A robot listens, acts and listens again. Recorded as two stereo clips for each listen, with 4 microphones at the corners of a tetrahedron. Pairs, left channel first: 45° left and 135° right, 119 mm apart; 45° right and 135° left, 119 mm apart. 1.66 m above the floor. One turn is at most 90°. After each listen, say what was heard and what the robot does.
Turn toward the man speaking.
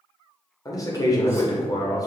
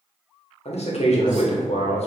The man speaking: 15° right. Turn 15° right.
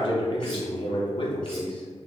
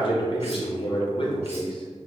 Facing the man speaking.